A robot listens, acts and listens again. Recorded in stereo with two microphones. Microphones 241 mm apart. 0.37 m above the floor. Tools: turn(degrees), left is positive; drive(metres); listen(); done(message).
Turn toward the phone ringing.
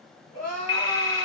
turn(degrees=60)
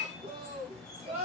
listen()
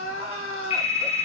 turn(degrees=25)
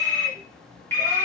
turn(degrees=10)
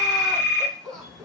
done("Found it: a phone ringing, straight ahead.")